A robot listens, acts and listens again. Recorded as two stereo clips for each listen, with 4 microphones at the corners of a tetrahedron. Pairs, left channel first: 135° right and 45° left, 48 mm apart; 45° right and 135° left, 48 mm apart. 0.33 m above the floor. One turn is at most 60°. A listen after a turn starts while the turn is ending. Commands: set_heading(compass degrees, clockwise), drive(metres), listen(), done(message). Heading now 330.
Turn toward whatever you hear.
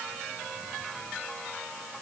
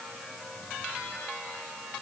listen()
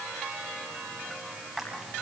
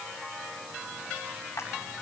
set_heading(10)
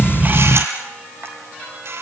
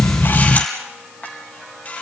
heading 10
set_heading(355)
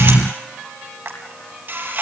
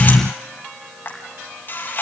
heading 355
done("Facing the camera shutter.")